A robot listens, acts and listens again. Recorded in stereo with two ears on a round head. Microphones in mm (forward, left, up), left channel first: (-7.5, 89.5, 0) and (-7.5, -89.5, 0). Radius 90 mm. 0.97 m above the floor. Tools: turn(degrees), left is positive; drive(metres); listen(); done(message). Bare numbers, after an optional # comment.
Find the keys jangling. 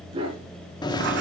# The keys jangling: about 20° left or 160° left.
turn(20)
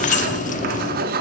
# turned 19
# So it is at 140° left.
turn(140)
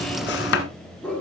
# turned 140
done("Found it: keys jangling, straight ahead.")